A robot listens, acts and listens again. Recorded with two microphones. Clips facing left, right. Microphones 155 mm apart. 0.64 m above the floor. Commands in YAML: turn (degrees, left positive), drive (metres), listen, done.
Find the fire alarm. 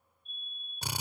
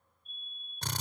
turn: -55
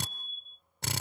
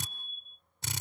done: "Found it: a fire alarm, straight ahead."